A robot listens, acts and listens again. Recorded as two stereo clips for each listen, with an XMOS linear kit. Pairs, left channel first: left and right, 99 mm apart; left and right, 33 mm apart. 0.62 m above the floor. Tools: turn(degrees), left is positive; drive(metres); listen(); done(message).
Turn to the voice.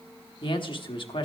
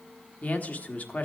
turn(degrees=50)
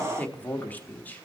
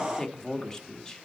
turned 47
turn(degrees=20)
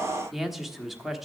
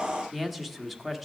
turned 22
done("Found it: a man speaking, straight ahead, 1 to 2 m away.")